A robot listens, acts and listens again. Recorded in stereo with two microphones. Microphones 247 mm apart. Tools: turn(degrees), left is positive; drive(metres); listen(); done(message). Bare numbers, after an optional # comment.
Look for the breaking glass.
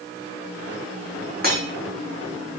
# The breaking glass: about 35° right or 145° right.
turn(-35)
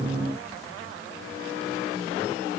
listen()
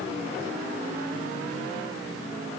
done("I heard breaking glass, but can't make it out now. It was about straight ahead or 110° right.")